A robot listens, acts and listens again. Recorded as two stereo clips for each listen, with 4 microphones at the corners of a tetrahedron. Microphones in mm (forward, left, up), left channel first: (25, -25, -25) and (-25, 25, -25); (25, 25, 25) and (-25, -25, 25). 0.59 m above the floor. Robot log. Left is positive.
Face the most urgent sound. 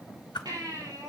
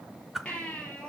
note: The baby crying: 120° left.
cmd yaw +120
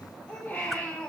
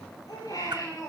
note: The baby crying is now 30° left.
cmd yaw +30
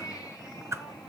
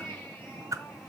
end: Facing the baby crying.